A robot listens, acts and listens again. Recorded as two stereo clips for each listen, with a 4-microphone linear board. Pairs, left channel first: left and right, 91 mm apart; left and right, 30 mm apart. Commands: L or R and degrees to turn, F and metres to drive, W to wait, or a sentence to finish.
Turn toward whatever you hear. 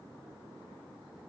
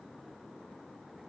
W
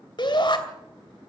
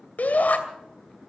L60
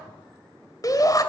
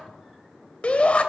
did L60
L45
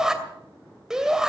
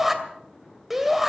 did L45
Found it: a shout, straight ahead.